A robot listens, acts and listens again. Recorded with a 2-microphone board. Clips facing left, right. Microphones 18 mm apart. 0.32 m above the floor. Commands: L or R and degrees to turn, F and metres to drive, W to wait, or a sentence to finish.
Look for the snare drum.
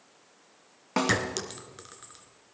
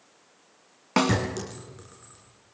R35
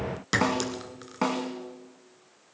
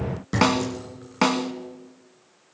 R110
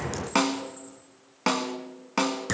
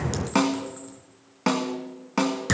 L15
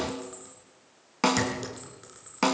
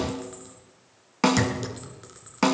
Facing the snare drum, 1 to 2 m away.